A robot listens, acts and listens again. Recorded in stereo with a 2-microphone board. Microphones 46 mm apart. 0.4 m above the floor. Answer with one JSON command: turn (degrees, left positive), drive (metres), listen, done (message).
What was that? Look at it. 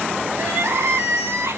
{"turn": -90}
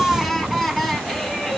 {"done": "Found it: crying, straight ahead, under 1 m away."}